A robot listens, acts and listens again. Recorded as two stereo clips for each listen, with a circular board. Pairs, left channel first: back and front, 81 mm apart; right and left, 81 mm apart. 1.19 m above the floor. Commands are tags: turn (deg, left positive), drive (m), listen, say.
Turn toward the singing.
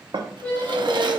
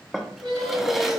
<turn deg="115"/>
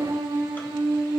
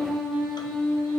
<say>Facing the singing, 2 to 4 m away.</say>